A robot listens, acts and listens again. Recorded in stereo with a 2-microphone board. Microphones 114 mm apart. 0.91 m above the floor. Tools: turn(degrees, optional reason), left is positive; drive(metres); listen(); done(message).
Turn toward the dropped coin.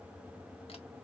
listen()
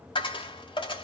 turn(degrees=50, reason="The dropped coin: about 50° left or 130° left.")
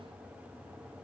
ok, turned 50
listen()
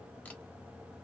done("I heard a dropped coin, but can't make it out now. It was about straight ahead or 80° left.")